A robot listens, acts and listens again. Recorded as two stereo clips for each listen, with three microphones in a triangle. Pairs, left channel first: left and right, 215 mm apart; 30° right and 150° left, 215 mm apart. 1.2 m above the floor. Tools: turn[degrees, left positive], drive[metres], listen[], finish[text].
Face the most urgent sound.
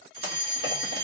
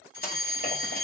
Thought: The fire alarm: 35° right.
Action: turn[-35]
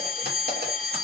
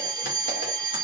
Action: finish[Facing the fire alarm, 1 to 2 m away.]